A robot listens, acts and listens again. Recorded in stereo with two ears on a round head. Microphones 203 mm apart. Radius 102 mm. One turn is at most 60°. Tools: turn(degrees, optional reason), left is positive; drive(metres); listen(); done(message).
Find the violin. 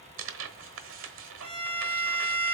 turn(degrees=-30, reason="The violin: about 30° right or 150° right.")
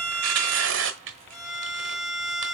done("Found it: a violin, straight ahead.")